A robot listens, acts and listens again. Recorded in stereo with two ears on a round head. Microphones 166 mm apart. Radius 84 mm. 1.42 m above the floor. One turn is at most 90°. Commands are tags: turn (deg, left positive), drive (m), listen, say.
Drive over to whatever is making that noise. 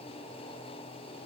<listen/>
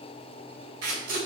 <turn deg="-65"/>
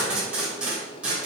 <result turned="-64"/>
<drive m="1.0"/>
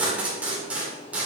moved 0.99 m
<turn deg="-10"/>
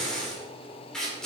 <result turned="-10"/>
<drive m="1.0"/>
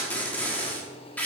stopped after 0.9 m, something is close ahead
<turn deg="10"/>
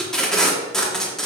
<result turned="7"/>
<say>I am next to the tape being pulled.</say>